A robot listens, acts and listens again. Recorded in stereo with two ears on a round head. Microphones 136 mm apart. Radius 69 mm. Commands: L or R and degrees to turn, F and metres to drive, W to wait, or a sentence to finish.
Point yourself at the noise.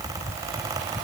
W
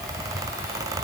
W
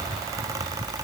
I can't make out anything to turn to.